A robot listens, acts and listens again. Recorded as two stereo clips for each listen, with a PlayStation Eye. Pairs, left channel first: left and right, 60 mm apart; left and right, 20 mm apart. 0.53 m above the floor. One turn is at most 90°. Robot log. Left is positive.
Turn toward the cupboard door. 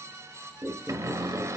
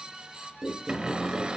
note: The cupboard door: about 70° right or 110° right.
cmd yaw -70
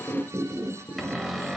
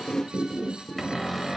end: Facing the cupboard door, 1 to 2 m away.